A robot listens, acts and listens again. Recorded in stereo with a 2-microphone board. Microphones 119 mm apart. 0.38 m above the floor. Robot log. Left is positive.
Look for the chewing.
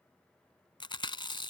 note: The chewing: about 45° left or 135° left.
cmd yaw +45
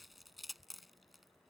end: Facing the chewing.